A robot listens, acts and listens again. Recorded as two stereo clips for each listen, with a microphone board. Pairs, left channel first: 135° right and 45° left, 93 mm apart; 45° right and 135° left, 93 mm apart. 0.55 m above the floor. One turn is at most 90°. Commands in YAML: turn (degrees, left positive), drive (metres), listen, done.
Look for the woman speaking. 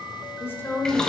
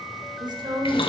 turn: 90
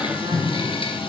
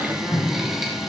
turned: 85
turn: 75
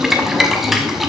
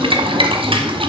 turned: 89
turn: -15
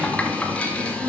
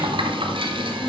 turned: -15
turn: -20
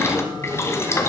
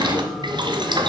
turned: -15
listen: true
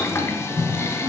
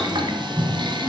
listen: true
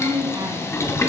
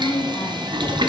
done: "Facing the woman speaking."